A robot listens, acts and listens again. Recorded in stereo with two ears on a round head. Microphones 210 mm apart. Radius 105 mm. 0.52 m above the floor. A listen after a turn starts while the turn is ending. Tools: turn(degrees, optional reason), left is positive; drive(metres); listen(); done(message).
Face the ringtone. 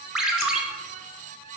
turn(degrees=30)
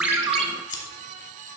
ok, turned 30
listen()
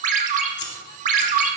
turn(degrees=-35, reason="So it is at 35° right.")
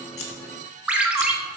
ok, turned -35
done("Found it: a ringtone, straight ahead, under 1 m away.")